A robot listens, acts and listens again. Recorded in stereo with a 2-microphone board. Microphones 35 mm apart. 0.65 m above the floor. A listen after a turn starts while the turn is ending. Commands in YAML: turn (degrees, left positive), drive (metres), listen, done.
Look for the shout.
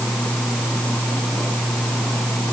listen: true
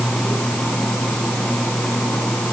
listen: true
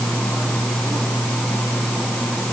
done: "I can't make out a shout to turn to."